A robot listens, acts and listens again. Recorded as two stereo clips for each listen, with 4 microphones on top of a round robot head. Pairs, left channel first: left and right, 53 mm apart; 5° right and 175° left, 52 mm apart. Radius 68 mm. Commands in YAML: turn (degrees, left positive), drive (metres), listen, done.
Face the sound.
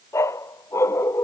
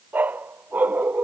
turn: 120
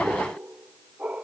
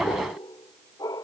turn: -15
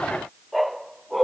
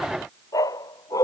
done: "Facing the dog barking."